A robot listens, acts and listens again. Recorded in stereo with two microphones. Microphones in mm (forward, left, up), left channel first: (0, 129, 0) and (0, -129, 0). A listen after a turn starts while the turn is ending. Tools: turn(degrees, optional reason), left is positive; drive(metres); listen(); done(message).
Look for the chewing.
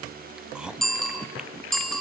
turn(degrees=-30)
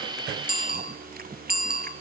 turn(degrees=-145, reason="So it is at 145° right.")
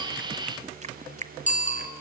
turn(degrees=-25, reason="The chewing is now 25° right.")
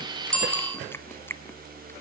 turn(degrees=10, reason="The chewing is now 10° left.")
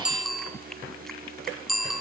listen()
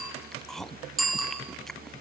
done("Found it: chewing, straight ahead.")